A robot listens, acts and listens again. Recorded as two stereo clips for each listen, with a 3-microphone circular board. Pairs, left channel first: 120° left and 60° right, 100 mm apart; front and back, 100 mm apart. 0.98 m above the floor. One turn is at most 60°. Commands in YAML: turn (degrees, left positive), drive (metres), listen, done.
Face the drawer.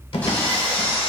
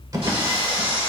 turn: 60
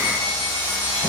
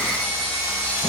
turn: 60
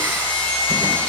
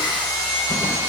turn: 10
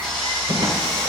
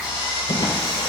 turn: -25
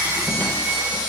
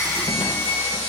listen: true
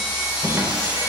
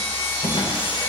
done: "Found it: a drawer, straight ahead."